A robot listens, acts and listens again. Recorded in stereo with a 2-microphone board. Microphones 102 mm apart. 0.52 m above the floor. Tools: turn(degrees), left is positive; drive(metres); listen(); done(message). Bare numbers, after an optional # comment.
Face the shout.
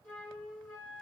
listen()
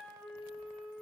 listen()
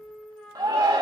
# The shout: about 40° right or 140° right.
turn(-40)
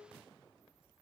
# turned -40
listen()
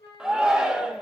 done("Found it: a shout, straight ahead.")